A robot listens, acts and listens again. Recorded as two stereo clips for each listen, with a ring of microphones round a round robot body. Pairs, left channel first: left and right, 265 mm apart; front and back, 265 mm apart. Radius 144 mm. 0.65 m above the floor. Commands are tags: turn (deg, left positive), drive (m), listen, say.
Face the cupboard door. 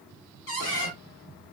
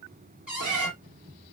<turn deg="95"/>
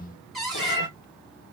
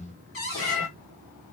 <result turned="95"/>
<say>Found it: a cupboard door, straight ahead, 1 to 2 m away.</say>